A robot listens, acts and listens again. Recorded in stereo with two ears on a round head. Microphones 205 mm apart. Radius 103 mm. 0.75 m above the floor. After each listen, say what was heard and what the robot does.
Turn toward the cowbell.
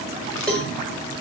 Turn 30° left.
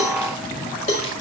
So it is at 140° left. Turn 140° left.
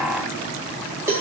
The cowbell is now 15° right. Turn 15° right.
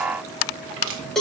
Found it: a cowbell, straight ahead.